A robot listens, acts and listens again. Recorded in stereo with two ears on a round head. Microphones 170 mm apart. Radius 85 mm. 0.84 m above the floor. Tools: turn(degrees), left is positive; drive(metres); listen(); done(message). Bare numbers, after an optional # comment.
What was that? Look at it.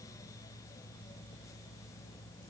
listen()
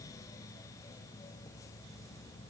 listen()
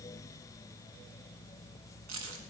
turn(-90)
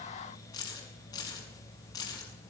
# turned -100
# So it is at 20° left.
turn(20)
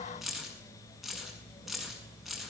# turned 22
done("Found it: keys jangling, straight ahead, over 4 m away.")